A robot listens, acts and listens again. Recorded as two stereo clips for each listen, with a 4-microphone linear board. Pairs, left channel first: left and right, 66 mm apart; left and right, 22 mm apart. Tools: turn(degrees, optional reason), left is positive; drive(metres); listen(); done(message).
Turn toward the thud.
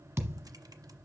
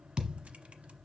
turn(degrees=-40, reason="The thud: about 40° right or 140° right.")
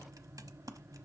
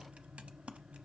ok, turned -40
listen()
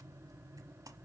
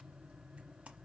done("I heard a thud, but can't make it out now. It was about straight ahead or 100° right.")